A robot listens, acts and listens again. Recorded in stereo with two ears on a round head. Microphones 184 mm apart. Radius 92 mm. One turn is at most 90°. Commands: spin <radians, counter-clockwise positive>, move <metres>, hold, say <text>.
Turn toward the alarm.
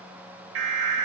spin -1.05
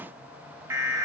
spin -0.26
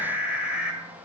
say Facing the alarm, 1 to 2 m away.